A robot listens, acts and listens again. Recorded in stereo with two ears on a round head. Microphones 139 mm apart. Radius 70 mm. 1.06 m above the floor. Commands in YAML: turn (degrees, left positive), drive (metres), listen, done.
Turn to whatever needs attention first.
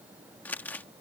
listen: true
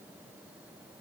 listen: true
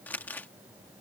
done: "I can't make out anything urgent, only crumpling."